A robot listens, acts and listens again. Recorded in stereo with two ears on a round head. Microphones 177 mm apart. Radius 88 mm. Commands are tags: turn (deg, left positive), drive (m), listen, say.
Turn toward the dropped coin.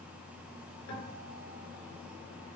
<listen/>
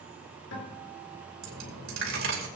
<turn deg="-90"/>
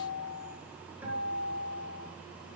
<say>Facing where the dropped coin came from. I can't hear it now.</say>